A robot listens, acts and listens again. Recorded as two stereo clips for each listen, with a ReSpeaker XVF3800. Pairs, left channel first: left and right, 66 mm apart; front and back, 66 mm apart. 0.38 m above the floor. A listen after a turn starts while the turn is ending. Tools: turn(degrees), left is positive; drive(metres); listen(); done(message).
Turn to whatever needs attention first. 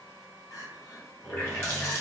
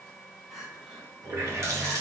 turn(degrees=95)
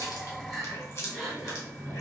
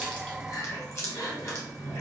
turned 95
done("Found it: crying, straight ahead.")